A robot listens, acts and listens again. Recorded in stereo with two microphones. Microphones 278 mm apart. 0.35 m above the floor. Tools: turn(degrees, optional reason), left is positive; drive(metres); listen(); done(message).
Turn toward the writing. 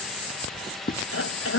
turn(degrees=30, reason="The writing: about 30° left or 150° left.")
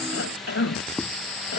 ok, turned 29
done("Found it: writing, straight ahead.")